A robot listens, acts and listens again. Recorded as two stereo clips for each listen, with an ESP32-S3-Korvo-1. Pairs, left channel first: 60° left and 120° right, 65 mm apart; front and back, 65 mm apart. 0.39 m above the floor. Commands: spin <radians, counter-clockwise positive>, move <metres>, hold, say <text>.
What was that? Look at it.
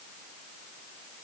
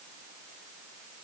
hold
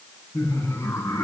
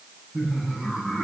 spin 1.75
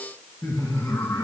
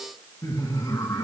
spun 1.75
spin 0.44
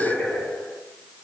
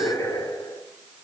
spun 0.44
say Facing the laughter, over 4 m away.